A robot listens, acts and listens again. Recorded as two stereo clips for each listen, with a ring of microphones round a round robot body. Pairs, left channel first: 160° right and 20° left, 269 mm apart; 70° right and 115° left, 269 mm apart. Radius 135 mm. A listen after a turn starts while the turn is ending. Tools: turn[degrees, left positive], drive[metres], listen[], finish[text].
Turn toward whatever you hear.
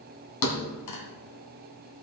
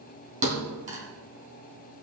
Thought: The thud: 175° left.
Action: turn[175]
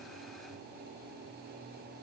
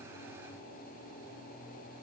Action: finish[I heard a thud from this way, but can't make it out now.]